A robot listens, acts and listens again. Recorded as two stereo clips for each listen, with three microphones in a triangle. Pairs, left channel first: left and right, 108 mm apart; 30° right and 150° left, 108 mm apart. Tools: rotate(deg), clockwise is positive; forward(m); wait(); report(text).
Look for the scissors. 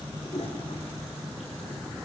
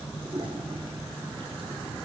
wait()
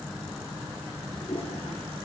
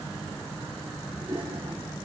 wait()
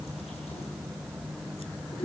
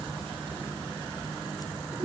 report("I can't make out scissors.")